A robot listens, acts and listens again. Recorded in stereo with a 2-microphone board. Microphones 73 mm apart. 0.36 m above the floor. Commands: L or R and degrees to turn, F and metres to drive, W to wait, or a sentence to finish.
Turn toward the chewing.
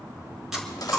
R30
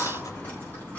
W
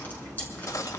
W
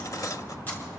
I heard chewing, but can't make it out now. It was about 25° left or 145° right.